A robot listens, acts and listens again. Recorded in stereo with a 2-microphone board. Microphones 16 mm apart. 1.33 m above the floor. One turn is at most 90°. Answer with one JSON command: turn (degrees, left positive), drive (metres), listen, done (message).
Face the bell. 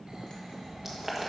{"listen": true}
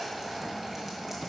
{"listen": true}
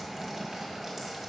{"done": "I can't make out a bell to turn to."}